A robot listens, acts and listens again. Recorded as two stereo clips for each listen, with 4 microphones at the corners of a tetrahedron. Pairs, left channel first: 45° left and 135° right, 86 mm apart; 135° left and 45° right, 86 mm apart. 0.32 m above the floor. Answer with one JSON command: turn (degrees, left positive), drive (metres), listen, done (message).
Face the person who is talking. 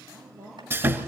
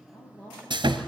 {"turn": 170}
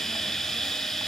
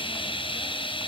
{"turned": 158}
{"turn": 10}
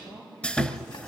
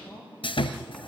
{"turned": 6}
{"done": "Facing the woman speaking."}